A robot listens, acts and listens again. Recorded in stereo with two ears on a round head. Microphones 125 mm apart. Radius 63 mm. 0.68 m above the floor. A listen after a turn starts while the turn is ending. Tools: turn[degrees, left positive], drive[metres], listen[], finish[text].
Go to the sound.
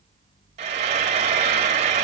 Thought: The frying: about 50° right or 130° right.
Action: turn[-50]
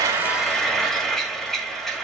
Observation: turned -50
Action: drive[1.0]
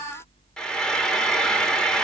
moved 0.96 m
Action: drive[1.0]
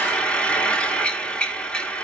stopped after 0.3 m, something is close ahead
Thought: The frying is now 10° left.
Action: turn[10]
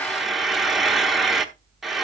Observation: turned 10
Action: finish[Arrived at the frying, straight ahead.]